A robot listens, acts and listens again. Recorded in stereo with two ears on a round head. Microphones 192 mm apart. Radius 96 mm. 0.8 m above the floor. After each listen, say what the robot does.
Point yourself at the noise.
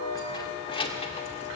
Turn 25° left.
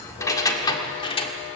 Turn 25° left.
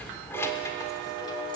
Turn 30° left.
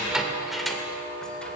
Found it: keys jangling, straight ahead, 2 to 4 m away.